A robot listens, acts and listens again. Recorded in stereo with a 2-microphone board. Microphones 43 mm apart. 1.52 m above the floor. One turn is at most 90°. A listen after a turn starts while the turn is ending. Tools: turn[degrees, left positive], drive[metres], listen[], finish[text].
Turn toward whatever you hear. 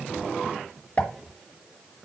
Thought: The pop: about 35° left or 145° left.
Action: turn[35]
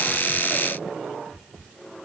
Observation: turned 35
Action: listen[]
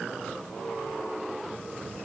Action: finish[I heard a pop, but can't make it out now. It was about straight ahead or 110° left.]